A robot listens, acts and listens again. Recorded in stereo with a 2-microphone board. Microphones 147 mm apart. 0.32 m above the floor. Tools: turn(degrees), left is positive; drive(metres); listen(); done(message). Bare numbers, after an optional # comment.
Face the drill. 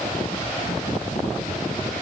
listen()
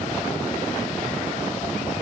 listen()
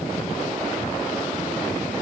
done("I can't make out a drill.")